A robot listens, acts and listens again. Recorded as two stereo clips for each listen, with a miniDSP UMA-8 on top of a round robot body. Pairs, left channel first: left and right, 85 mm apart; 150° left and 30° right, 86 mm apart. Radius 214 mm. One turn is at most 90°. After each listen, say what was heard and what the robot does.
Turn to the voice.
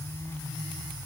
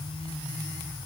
Keep listening.
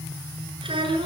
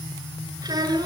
The child speaking: 70° right. Turn 70° right.
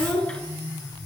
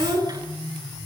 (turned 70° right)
The child speaking is now 15° left. Turn 15° left.
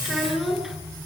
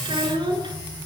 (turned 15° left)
Facing the child speaking, over 4 m away.